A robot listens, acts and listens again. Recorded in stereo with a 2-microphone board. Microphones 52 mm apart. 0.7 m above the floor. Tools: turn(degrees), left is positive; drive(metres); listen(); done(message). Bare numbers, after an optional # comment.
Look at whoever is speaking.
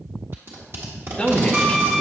# The man speaking: about 20° left or 160° left.
turn(20)
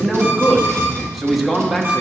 done("Found it: a man speaking, straight ahead.")